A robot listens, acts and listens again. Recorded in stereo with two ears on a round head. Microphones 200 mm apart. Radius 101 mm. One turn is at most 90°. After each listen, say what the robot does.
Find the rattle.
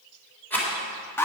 Turn 30° left.
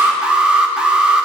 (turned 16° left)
Keep listening.
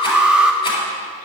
Keep listening.
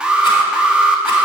I heard a rattle, but can't make it out now. It was about 5° right or 155° left.